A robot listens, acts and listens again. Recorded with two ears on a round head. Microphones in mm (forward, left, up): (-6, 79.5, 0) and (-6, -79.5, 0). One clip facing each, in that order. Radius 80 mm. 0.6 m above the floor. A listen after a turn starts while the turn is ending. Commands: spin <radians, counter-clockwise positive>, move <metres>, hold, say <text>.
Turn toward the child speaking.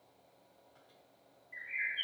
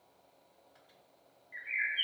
hold
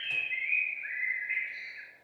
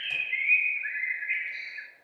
hold
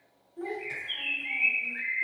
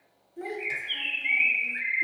spin -0.52
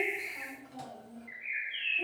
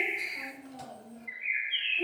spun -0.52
spin -0.35
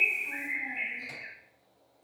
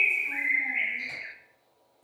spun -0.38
say Facing the child speaking, 2 to 4 m away.